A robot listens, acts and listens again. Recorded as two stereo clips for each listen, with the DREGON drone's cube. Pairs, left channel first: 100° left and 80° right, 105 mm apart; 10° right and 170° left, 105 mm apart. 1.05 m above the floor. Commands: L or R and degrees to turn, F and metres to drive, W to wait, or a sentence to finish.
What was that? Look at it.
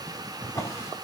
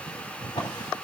L35
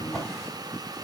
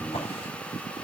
L15
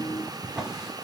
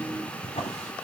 Facing the drawer, over 4 m away.